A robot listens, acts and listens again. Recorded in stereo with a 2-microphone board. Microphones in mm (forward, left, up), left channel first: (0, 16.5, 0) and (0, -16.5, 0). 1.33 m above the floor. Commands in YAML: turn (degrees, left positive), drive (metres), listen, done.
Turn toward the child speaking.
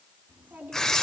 turn: -90
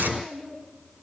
turn: -10
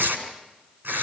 listen: true
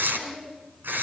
done: "Found it: a child speaking, straight ahead."